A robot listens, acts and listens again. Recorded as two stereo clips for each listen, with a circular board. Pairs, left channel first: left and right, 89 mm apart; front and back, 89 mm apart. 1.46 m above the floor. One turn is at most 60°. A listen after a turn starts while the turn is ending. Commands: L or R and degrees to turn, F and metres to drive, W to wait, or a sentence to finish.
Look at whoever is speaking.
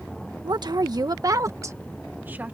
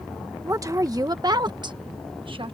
R60
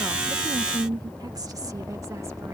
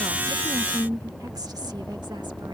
R60
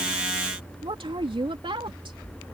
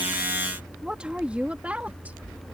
R60
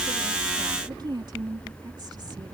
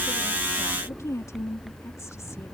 R55
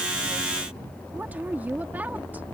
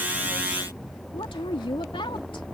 R20
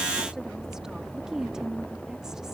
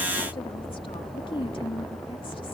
Facing the woman speaking.